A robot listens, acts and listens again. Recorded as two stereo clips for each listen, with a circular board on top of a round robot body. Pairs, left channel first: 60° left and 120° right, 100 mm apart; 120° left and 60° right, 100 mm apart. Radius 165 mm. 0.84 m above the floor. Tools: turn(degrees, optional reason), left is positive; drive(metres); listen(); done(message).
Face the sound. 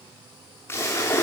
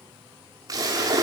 turn(degrees=-10, reason="The splash: 10° right.")
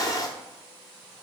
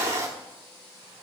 done("Facing the splash, under 1 m away.")